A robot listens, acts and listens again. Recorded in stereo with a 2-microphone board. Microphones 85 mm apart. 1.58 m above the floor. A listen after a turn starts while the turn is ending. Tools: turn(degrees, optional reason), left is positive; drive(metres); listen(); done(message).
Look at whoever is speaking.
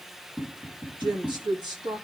turn(degrees=-60, reason="The woman speaking: about 60° right or 120° right.")
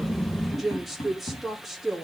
done("Found it: a woman speaking, straight ahead.")